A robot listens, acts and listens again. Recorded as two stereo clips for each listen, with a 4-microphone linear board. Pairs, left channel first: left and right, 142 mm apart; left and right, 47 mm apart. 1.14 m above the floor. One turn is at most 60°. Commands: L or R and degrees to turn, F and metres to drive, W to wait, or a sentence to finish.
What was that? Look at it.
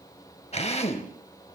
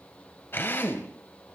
L50
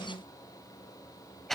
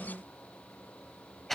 Facing the drill.